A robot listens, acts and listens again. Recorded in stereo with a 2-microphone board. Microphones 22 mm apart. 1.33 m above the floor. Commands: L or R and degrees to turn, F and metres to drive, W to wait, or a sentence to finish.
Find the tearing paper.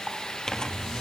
L30
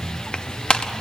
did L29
L120
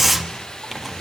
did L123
Facing the tearing paper, 1 to 2 m away.